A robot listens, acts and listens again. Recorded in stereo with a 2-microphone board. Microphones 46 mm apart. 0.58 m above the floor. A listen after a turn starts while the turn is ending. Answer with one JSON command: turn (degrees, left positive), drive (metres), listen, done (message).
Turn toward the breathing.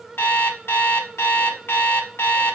{"listen": true}
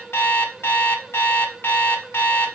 {"listen": true}
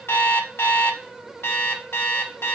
{"done": "I can't make out breathing to turn to."}